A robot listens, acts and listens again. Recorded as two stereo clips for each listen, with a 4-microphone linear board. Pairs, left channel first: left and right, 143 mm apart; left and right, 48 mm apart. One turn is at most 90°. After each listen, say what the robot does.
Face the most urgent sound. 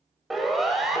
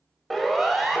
Turn 30° left.
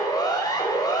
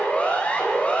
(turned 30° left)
Turn 90° left.
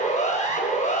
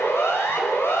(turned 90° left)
Turn 65° left.
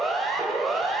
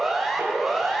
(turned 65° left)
Found it: a siren, straight ahead, over 4 m away.